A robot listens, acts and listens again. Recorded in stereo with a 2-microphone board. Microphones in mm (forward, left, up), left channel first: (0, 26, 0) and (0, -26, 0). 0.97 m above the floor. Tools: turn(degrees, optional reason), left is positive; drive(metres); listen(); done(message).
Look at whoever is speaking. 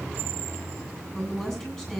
turn(degrees=30)
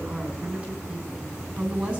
turn(degrees=-20, reason="So it is at 20° right.")
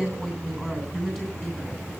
turn(degrees=10, reason="The woman speaking is now 10° left.")
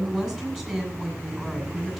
done("Found it: a woman speaking, straight ahead.")